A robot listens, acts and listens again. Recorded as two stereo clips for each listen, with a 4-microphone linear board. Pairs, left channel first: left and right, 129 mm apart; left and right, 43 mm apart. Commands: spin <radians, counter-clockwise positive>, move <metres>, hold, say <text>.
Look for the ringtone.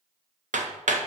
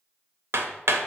hold
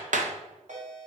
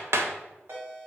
spin -1.13
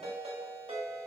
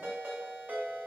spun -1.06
spin -0.96
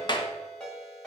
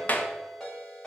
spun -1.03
say Found it: a ringtone, straight ahead.